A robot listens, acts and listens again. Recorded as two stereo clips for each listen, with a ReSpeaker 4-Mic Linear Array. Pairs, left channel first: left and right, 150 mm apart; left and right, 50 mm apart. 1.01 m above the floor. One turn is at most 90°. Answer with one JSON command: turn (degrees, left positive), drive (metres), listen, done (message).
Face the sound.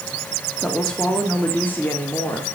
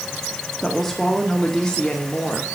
{"turn": 15}
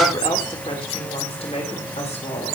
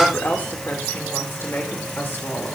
{"turn": 90}
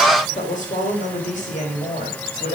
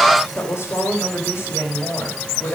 {"turn": 55}
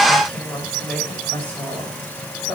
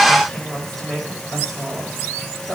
{"turn": 10}
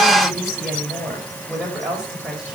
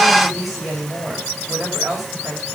{"done": "Found it: a woman speaking, straight ahead."}